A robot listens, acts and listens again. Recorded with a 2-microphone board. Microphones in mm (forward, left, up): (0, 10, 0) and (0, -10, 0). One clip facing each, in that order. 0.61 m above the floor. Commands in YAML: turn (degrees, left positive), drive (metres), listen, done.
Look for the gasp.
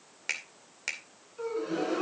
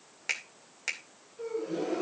turn: 90
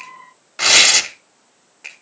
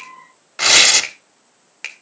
done: "Facing where the gasp came from. I can't hear it now."